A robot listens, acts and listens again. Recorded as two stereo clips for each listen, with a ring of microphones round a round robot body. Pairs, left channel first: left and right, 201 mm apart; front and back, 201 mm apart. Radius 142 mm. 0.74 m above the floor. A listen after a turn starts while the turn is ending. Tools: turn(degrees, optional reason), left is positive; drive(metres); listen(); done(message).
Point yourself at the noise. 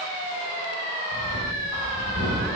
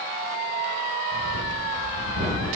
turn(degrees=-130, reason="The breathing: 130° right.")
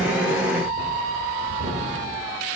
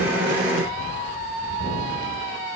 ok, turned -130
turn(degrees=-40, reason="The breathing is now 40° right.")
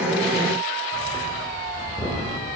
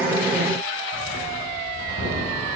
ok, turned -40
turn(degrees=15, reason="The breathing is now 15° left.")
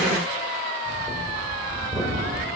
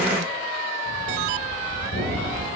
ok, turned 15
done("Facing the breathing.")